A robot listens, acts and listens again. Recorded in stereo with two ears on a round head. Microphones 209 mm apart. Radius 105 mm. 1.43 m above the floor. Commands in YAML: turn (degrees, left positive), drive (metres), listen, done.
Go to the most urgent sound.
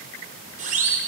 turn: -35
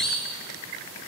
drive: 1.0
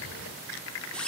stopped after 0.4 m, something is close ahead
done: "Something is in my way. I am facing the siren but have not reached it."